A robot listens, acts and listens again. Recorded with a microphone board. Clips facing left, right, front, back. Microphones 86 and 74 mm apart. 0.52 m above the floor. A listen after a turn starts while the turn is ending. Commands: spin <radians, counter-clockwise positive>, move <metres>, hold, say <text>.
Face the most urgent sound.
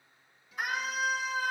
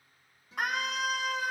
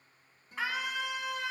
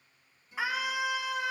spin -1.75
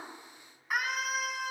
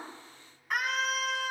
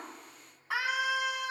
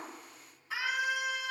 spin 0.17
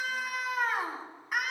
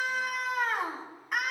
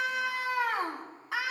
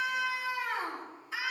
say Found it: a scream, straight ahead.